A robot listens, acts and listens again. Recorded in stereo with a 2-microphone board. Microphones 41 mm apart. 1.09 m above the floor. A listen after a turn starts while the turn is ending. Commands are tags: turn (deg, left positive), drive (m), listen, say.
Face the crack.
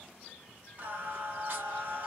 <listen/>
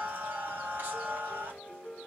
<listen/>
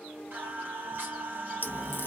<turn deg="55"/>
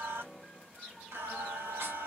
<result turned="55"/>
<listen/>
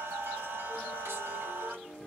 <say>I heard a crack, but can't make it out now. It was about straight ahead or 70° left.</say>